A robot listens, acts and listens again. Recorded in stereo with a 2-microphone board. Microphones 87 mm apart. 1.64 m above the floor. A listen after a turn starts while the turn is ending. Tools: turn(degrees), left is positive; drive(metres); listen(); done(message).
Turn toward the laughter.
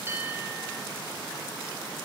listen()
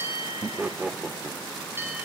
turn(degrees=-15)
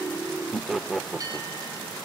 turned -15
done("Facing the laughter.")